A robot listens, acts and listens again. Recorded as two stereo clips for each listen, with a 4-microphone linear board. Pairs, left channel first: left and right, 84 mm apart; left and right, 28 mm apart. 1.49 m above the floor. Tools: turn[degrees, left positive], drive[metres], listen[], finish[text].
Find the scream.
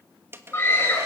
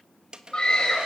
Thought: The scream: about 30° left or 150° left.
Action: turn[30]
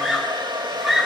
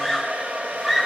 Action: finish[Found it: a scream, straight ahead.]